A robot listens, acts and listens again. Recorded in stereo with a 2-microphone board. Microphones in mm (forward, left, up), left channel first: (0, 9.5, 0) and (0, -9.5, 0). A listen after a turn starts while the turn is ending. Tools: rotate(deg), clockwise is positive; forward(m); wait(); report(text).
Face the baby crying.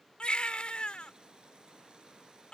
rotate(-70)
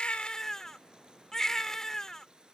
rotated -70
rotate(-30)
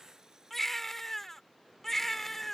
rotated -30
rotate(-15)
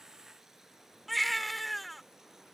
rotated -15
report("Found it: a baby crying, straight ahead.")